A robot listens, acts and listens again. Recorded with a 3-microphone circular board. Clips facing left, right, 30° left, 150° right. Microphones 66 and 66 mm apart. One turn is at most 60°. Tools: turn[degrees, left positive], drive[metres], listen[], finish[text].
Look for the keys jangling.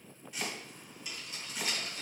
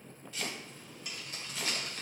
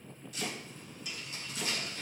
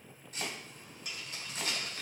Thought: The keys jangling: 125° right.
Action: turn[-60]
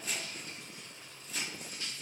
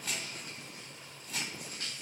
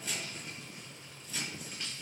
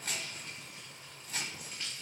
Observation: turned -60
Thought: The keys jangling is now 60° right.
Action: turn[-60]
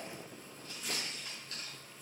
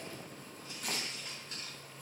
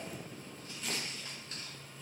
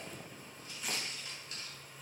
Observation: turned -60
Thought: The keys jangling is now 25° right.
Action: turn[-25]
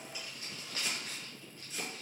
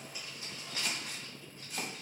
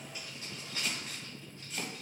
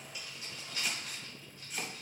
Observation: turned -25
Thought: The keys jangling is now 30° right.
Action: turn[-30]
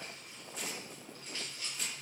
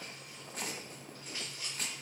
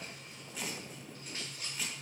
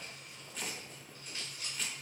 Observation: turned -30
Thought: The keys jangling is now 15° right.
Action: turn[-15]
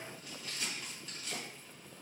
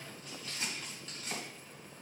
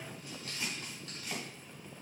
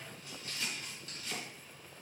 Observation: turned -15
Action: finish[Found it: keys jangling, straight ahead.]